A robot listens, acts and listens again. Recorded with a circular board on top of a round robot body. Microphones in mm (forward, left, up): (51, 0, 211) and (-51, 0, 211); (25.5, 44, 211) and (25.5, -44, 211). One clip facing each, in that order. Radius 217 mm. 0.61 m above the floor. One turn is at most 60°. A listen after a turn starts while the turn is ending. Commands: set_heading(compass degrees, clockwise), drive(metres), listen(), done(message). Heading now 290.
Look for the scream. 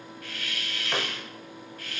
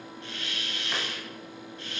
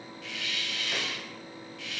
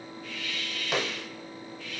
listen()
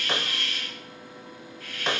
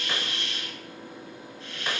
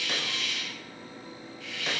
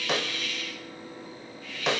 listen()
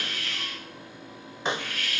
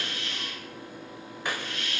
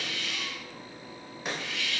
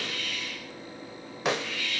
done("I can't make out a scream, only a hiss and a snare drum.")